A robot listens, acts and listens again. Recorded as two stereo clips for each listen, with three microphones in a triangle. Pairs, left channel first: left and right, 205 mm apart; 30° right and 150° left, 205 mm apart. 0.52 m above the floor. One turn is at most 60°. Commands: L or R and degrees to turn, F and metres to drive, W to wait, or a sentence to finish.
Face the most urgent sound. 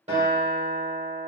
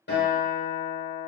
W
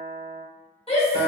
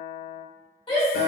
L30
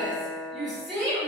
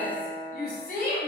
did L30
Facing the shout, 1 to 2 m away.